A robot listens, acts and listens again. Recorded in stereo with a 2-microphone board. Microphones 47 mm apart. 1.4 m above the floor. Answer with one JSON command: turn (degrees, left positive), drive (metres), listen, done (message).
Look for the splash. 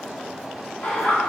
{"listen": true}
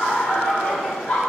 {"listen": true}
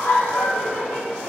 {"done": "I can't make out a splash to turn to."}